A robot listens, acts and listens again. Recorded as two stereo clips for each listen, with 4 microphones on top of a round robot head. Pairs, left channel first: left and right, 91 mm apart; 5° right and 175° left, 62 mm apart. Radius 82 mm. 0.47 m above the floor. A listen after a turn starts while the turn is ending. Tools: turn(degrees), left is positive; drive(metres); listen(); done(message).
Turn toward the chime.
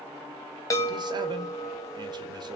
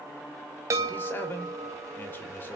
turn(degrees=145)
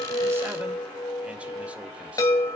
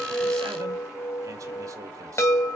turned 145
turn(degrees=40)
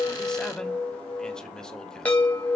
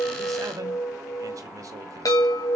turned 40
turn(degrees=15)
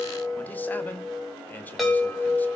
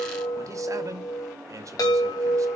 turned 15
done("Found it: a chime, straight ahead.")